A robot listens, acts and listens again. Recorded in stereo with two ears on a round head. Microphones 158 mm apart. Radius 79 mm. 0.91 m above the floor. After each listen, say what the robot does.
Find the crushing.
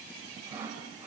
Keep listening.
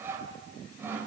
Keep listening.
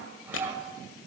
Turn 90° left.
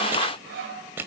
Turn 10° right.
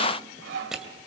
Found it: crushing, straight ahead.